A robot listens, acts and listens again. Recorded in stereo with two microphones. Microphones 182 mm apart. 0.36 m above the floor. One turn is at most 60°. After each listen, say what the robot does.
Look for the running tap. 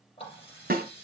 Turn 30° left.
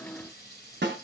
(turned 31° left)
Turn 60° left.
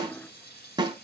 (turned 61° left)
Turn 60° left.
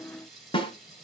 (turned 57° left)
Found it: a running tap, straight ahead.